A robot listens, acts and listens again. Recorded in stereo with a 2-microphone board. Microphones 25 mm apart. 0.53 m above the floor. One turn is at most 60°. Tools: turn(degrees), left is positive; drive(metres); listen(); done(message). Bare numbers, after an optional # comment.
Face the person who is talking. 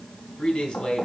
# The man speaking: about 45° left or 135° left.
turn(45)
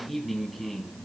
done("Facing the man speaking, 2 to 4 m away.")